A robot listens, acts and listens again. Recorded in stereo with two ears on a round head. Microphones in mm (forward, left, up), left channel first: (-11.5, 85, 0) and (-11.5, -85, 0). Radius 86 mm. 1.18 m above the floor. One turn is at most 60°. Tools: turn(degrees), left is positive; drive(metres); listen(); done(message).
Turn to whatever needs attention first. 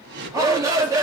turn(degrees=-15)
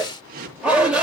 done("Found it: a shout, straight ahead.")